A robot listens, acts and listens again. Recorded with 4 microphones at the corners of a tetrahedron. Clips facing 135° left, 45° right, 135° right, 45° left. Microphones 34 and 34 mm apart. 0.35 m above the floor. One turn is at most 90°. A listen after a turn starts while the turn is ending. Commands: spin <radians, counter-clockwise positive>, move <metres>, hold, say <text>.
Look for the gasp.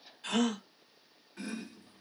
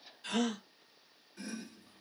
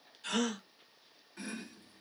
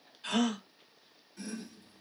spin 1.57
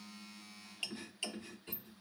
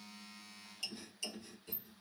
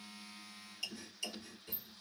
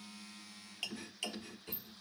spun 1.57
spin 0.44
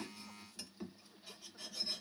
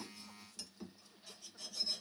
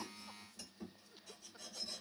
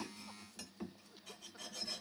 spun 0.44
say I heard a gasp from this way, but can't make it out now.